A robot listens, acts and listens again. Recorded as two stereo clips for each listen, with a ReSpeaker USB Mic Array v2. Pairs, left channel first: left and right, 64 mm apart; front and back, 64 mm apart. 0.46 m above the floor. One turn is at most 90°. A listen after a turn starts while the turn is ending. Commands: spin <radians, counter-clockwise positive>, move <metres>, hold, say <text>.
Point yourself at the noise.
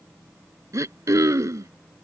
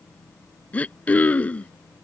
spin -1.13
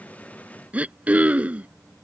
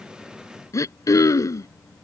spin -0.44
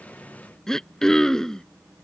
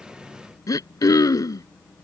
spin 0.17
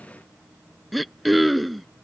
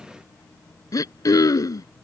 say Found it: throat clearing, straight ahead.